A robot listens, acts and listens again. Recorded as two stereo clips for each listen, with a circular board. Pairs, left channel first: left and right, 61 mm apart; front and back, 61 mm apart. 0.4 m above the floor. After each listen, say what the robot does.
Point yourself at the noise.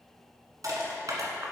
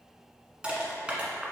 Turn 110° right.
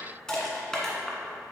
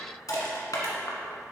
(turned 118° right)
Turn 10° left.
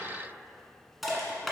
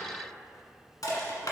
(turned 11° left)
Facing the crushing, 1 to 2 m away.